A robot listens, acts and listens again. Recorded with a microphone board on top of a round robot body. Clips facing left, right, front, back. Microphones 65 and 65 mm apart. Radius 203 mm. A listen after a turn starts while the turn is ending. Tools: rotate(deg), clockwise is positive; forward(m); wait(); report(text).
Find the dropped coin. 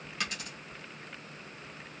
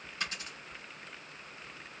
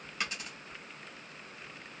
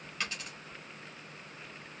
rotate(-75)
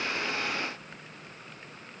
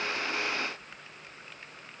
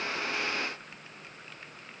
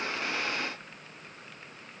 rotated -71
report("I heard a dropped coin from this way, but can't make it out now.")